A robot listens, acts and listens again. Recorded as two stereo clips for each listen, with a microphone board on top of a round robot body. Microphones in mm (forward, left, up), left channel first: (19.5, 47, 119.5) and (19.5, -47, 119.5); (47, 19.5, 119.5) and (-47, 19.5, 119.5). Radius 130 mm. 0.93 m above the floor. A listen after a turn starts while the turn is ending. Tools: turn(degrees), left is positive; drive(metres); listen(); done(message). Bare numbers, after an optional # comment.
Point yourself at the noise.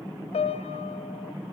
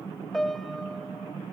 # The piano: 90° left.
turn(90)
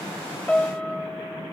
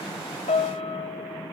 # The piano is now 10° left.
turn(10)
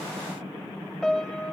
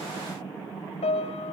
done("Found it: a piano, straight ahead.")